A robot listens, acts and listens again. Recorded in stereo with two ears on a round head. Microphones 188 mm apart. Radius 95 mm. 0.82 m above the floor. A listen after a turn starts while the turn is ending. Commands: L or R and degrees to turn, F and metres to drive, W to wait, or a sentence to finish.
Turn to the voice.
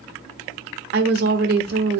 R50
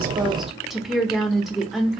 Facing the woman speaking, under 1 m away.